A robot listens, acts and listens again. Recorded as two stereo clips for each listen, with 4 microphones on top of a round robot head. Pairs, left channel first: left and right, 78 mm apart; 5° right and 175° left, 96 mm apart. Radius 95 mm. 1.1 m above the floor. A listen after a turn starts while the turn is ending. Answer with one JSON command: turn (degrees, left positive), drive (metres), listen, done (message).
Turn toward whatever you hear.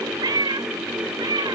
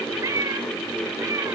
{"turn": -120}
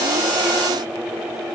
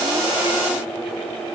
{"listen": true}
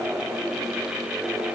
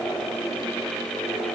{"listen": true}
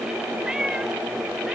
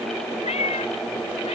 {"done": "Found it: a cat meowing, straight ahead."}